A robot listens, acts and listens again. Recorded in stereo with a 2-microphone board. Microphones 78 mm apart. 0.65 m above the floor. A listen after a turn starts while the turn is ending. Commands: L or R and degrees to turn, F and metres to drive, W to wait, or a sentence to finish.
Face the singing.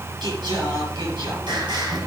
R70
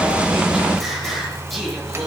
Found it: singing, straight ahead.